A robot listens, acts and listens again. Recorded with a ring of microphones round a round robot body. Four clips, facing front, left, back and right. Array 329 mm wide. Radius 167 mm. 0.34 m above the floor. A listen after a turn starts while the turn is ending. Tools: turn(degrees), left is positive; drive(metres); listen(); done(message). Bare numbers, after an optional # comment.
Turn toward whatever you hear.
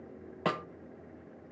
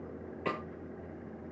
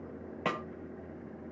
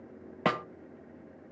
# The snare drum: 85° right.
turn(-85)
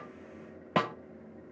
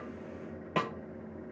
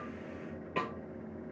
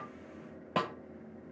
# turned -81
done("Facing the snare drum, 1 to 2 m away.")